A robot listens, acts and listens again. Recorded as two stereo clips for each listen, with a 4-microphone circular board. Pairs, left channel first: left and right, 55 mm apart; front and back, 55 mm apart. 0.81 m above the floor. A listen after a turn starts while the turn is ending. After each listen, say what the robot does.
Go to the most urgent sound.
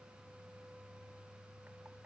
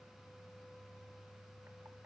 Keep listening.
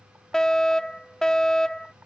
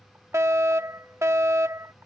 Turn 165° left.
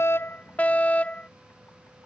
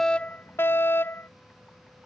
Turn 35° left.
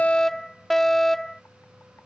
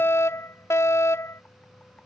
Turn 10° left.
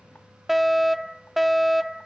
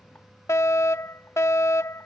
Drive 1.0 m forward.
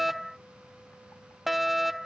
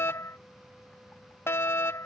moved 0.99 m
Drive 1.0 m forward.
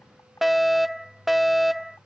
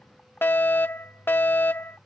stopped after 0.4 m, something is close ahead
I am next to the fire alarm.